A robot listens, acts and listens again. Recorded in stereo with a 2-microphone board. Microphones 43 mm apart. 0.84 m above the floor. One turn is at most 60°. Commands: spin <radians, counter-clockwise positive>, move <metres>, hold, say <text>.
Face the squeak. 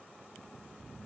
hold
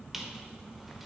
spin -0.52
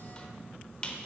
spin 0.35
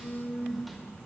hold
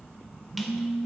hold
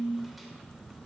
say Facing where the squeak came from. I can't hear it now.